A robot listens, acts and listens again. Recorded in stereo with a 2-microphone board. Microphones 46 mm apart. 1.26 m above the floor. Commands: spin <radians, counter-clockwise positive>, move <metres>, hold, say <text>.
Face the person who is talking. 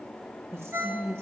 spin -1.13
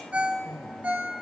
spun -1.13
say Found it: a woman speaking, straight ahead, under 1 m away.